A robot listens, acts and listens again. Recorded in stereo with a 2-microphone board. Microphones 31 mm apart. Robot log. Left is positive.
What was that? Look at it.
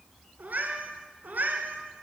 cmd yaw -90
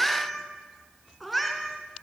end: Facing the cat meowing.